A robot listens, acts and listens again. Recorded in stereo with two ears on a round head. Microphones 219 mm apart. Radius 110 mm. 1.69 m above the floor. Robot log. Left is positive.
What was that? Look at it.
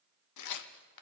cmd yaw +90
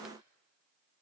cmd idle
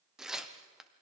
end: Found it: tearing paper, straight ahead, under 1 m away.